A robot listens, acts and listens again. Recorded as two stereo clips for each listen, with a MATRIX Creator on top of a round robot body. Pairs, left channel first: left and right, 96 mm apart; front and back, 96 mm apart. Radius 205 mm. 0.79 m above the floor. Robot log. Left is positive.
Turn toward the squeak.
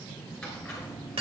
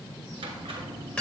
note: The squeak: 170° left.
cmd yaw +170
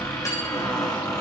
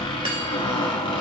note: The squeak is now 35° left.
cmd yaw +35
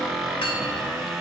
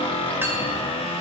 end: Found it: a squeak, straight ahead, 1 to 2 m away.